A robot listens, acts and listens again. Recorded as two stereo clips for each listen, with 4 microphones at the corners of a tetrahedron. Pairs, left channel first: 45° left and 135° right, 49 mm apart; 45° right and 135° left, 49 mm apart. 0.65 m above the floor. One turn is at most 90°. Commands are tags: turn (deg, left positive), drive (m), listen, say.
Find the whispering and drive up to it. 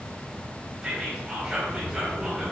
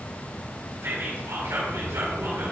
<turn deg="90"/>
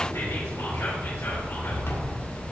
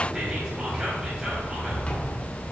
<turn deg="55"/>
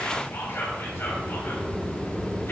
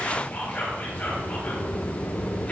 <turn deg="10"/>
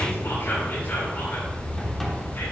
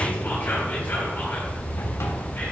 <listen/>
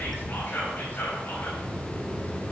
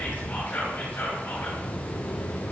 <drive m="1.0"/>
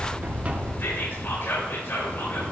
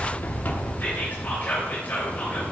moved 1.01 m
<drive m="1.0"/>
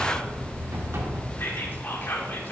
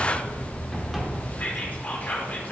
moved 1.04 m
<turn deg="10"/>
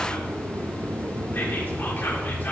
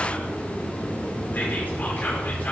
<drive m="1.0"/>
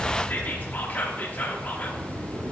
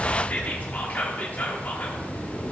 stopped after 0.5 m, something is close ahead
<say>Arrived at the whispering, straight ahead.</say>